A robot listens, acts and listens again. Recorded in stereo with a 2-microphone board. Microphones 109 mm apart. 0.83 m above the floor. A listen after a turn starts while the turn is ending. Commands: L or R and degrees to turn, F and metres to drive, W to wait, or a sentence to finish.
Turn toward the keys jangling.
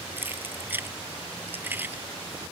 R20
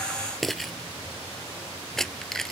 Facing the keys jangling.